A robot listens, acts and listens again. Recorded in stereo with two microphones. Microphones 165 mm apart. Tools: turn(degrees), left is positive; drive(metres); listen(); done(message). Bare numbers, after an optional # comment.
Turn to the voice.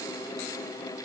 listen()
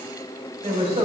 # The woman speaking: about 35° right or 145° right.
turn(-35)
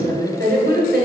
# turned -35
# So it is at 105° right.
turn(-105)
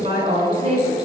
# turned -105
# The woman speaking is now 40° right.
turn(-40)
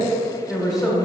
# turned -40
done("Facing the woman speaking, 2 to 4 m away.")